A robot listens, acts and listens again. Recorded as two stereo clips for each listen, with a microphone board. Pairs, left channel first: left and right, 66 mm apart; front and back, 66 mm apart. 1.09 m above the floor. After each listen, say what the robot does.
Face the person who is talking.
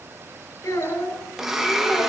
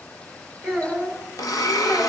Turn 80° left.
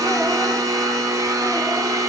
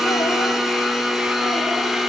Keep listening.
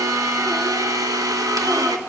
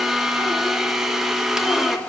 Keep listening.
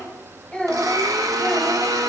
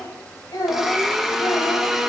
Turn 15° left.
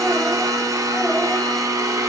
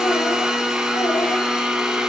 Keep listening.
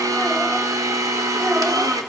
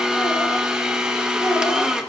Keep listening.
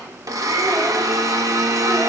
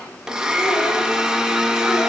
Facing where the child speaking came from. I can't hear it now.